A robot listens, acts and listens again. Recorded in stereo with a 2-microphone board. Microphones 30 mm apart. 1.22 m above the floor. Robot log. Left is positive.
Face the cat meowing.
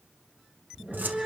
note: The cat meowing: about 25° right or 155° right.
cmd yaw -25
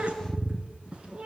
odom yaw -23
note: The cat meowing: about 35° right or 145° right.
cmd yaw -35
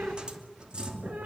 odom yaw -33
note: So it is at 125° right.
cmd yaw -125
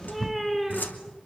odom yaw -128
end: Facing the cat meowing.